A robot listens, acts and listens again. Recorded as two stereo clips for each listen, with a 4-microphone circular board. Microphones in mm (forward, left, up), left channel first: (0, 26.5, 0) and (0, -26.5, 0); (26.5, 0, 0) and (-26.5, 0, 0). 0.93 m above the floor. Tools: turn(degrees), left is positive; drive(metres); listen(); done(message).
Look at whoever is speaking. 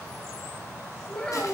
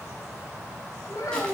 turn(degrees=15)
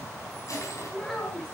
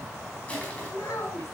turn(degrees=10)
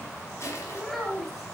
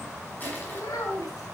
done("Facing the child speaking, 2 to 4 m away.")